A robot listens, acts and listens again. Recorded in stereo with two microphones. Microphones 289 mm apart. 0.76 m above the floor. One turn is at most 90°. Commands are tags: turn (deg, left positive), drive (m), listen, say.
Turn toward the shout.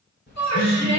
<turn deg="65"/>
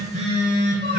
<listen/>
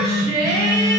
<turn deg="35"/>
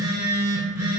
<listen/>
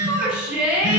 <say>Found it: a shout, straight ahead.</say>